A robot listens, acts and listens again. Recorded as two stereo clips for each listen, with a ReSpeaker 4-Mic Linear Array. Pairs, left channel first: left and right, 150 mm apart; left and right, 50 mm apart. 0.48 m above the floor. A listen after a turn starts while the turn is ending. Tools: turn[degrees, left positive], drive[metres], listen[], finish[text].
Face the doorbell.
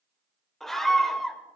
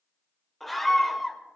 Action: listen[]
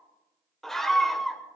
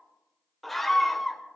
Action: listen[]
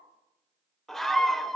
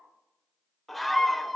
Action: finish[I can't make out a doorbell, only a scream.]